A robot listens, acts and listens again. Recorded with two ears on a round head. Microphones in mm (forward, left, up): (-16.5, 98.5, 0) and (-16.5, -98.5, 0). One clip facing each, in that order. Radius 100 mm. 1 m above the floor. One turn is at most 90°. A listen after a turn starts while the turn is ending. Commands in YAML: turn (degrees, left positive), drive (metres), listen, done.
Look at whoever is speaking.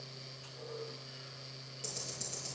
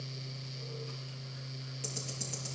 listen: true
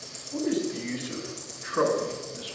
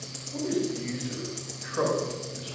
turn: 60
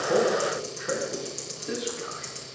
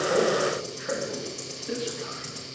turn: 55
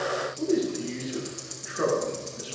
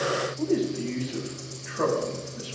turn: 15
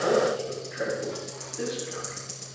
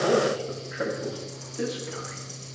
done: "Facing the man speaking, over 4 m away."